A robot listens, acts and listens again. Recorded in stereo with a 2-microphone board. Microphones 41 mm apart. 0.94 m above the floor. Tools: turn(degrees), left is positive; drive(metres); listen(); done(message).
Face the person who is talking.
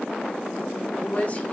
turn(degrees=35)
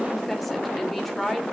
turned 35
done("Facing the woman speaking.")